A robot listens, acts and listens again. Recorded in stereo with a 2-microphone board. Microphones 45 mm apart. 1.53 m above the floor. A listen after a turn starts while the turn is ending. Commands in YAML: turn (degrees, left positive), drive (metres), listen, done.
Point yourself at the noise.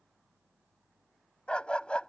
turn: 25
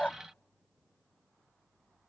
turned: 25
listen: true
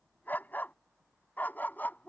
turn: 140
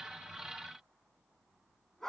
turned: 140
turn: 10
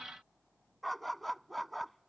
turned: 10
done: "Found it: a dog barking, straight ahead."